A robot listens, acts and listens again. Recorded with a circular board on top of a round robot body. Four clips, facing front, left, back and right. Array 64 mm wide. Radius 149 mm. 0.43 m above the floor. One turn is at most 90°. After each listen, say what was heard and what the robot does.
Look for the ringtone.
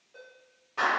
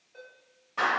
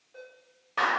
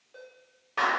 The ringtone: 95° right. Turn 90° right.
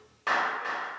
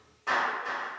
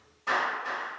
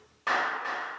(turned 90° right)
Keep listening.
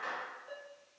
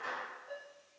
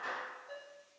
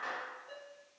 Facing the ringtone, 1 to 2 m away.